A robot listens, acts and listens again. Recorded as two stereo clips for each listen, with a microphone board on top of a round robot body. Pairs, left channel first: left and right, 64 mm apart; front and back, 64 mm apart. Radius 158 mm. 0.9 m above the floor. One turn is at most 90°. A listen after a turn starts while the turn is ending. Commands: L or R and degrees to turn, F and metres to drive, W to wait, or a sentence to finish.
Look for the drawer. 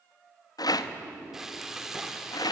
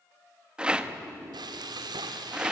L90
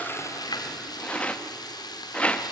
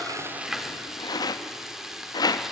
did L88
L50
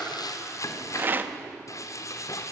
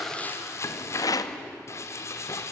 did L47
Found it: a drawer, straight ahead, over 4 m away.